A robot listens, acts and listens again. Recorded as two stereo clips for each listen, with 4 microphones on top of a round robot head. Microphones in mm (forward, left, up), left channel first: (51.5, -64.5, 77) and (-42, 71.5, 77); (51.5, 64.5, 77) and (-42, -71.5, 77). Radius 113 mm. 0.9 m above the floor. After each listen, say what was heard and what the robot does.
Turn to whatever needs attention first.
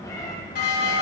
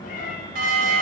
The alarm: 85° right. Turn 85° right.
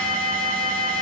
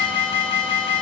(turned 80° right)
Found it: an alarm, straight ahead, 2 to 4 m away.